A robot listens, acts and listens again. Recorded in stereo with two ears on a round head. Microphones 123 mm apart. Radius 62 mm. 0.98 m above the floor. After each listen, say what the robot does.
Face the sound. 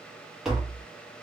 Turn 30° right.
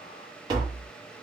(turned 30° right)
Turn 145° right.
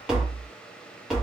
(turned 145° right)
Found it: tapping, straight ahead.